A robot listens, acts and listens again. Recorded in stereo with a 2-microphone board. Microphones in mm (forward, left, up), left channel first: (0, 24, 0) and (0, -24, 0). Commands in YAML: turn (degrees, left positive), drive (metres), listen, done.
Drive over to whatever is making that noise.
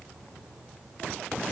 listen: true
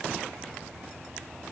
listen: true
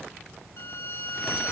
turn: 60
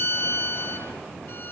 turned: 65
turn: 55
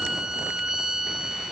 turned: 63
turn: -10
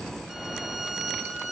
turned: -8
drive: 1.0
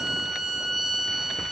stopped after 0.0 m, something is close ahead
done: "Something is in my way. I am facing the violin but have not reached it."